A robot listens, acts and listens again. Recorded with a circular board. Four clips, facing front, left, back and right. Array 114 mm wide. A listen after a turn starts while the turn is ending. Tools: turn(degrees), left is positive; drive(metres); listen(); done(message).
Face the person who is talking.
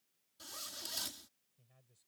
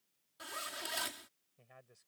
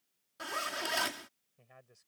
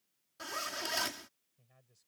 turn(degrees=145)
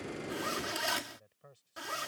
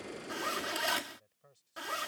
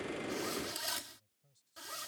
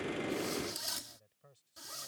done("Facing the man speaking.")